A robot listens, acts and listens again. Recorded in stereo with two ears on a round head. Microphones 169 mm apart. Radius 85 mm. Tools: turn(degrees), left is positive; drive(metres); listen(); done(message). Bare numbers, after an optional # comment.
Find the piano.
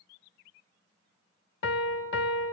# The piano: about 65° left or 115° left.
turn(65)
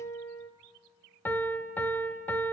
# So it is at 10° left.
turn(10)
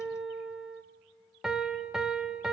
done("Facing the piano.")